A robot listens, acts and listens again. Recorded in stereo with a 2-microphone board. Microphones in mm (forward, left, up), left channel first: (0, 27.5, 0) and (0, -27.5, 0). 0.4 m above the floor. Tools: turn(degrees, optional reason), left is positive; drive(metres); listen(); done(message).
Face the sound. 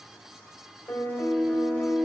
turn(degrees=50, reason="The piano: about 50° left or 130° left.")
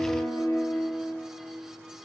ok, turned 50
turn(degrees=80, reason="So it is at 80° left.")
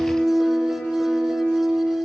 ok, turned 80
done("Facing the piano, 1 to 2 m away.")